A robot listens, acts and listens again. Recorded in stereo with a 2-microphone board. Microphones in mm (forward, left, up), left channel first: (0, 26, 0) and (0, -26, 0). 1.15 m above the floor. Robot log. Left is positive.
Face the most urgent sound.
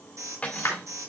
cmd yaw -90
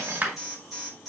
end: Facing the alarm.